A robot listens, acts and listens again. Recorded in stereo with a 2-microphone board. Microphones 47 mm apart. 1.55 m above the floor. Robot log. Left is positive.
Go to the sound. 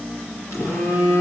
note: The phone buzzing: about 75° left or 105° left.
cmd yaw +75
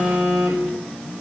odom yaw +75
cmd fwd 1.0
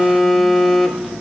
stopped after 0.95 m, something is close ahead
end: Arrived at the phone buzzing, straight ahead.